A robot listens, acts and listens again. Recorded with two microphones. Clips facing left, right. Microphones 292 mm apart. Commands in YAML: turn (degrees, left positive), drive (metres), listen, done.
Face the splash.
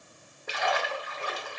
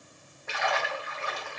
turn: 40
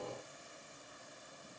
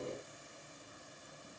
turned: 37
listen: true
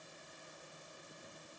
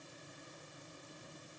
done: "I heard a splash, but can't make it out now. It was about 5° left or 100° left."